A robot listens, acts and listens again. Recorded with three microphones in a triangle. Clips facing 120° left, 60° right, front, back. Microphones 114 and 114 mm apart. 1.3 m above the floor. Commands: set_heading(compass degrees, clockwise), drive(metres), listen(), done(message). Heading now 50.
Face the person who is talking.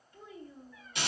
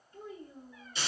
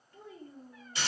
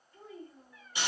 set_heading(65)
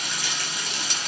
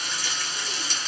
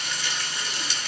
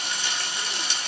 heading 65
listen()
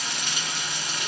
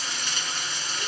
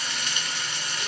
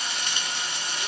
listen()
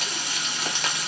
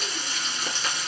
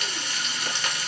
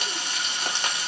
done("I heard a child speaking from this way, but can't make it out now.")